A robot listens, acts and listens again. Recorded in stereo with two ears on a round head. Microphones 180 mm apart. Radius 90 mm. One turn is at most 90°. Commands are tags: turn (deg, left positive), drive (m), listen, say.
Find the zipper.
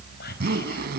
<turn deg="-50"/>
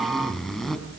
<say>Facing the zipper, 2 to 4 m away.</say>